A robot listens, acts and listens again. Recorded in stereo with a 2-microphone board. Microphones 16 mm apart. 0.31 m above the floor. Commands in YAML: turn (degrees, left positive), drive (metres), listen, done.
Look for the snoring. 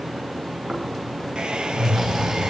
turn: -35
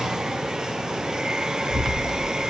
turn: -110
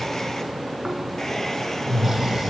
turn: -25
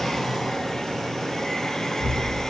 turn: -15
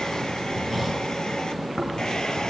done: "Found it: snoring, straight ahead."